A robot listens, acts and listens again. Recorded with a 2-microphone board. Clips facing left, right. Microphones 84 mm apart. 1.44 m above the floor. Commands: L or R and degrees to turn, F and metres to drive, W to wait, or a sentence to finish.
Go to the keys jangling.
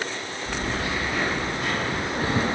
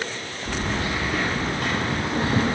R75
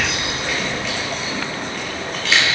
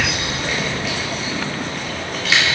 F1.0
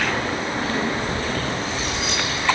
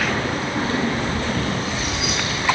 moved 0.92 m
F1.0
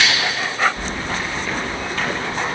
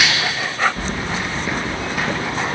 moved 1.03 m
R10
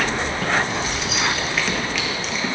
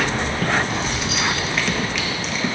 F1.0
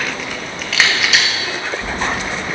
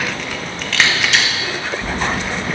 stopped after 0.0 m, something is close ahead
I am next to the keys jangling.